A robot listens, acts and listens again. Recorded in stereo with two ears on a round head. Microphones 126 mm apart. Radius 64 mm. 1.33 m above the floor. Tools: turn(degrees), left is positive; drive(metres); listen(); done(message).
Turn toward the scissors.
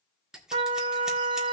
turn(degrees=-30)
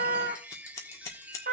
turn(degrees=20)
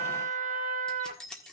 done("Found it: scissors, straight ahead.")